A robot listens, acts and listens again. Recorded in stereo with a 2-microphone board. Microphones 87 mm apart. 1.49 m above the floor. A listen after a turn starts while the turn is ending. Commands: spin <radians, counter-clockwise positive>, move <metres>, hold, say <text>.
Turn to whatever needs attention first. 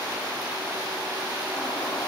hold
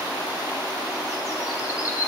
hold
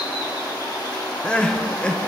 spin 0.52
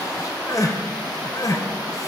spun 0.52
spin 2.44
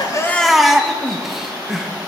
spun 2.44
say Facing the crying.